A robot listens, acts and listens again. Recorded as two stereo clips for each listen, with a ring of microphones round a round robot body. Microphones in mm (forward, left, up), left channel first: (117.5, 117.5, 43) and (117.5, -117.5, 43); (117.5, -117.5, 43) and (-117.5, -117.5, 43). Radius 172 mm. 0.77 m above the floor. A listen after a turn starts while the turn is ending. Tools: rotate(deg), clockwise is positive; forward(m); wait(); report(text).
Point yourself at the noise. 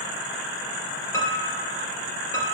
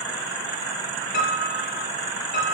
rotate(-15)
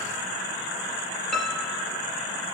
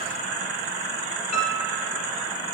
report("Found it: a piano, straight ahead.")